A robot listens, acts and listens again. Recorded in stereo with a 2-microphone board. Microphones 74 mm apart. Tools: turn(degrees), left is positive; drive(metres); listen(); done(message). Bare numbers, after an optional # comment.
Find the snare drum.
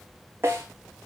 # The snare drum: about 35° right or 145° right.
turn(-35)
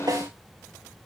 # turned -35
# So it is at 110° right.
turn(-110)
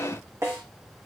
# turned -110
# The snare drum is now 40° right.
turn(-40)
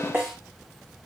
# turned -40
# The snare drum is now 30° right.
turn(-30)
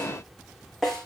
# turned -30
done("Facing the snare drum, over 4 m away.")